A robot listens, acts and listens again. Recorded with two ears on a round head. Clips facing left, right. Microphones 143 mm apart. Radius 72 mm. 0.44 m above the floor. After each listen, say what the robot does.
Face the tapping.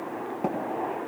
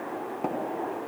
Turn 30° left.
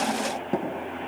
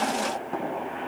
Turn 145° left.
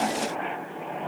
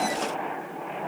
Keep listening.
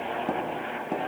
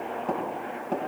Turn 10° left.
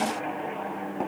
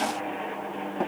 Facing the tapping.